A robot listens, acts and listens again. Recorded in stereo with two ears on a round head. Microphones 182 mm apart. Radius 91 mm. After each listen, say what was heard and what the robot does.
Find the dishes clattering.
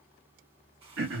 Keep listening.
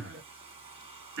Keep listening.
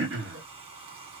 I can't make out dishes clattering to turn to.